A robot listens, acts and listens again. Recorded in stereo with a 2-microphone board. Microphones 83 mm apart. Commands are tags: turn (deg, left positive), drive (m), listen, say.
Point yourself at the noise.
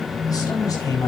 <turn deg="45"/>
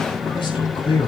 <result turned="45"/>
<turn deg="100"/>
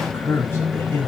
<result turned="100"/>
<turn deg="30"/>
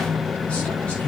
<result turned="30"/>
<turn deg="20"/>
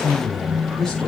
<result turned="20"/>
<say>Facing the man speaking, over 4 m away.</say>